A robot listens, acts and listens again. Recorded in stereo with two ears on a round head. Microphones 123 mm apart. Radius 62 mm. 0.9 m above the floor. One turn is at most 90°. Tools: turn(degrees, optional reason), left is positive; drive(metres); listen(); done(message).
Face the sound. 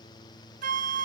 turn(degrees=-60, reason="The flute: about 60° right or 120° right.")
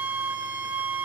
turn(degrees=-15, reason="So it is at 15° right.")
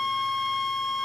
done("Facing the flute.")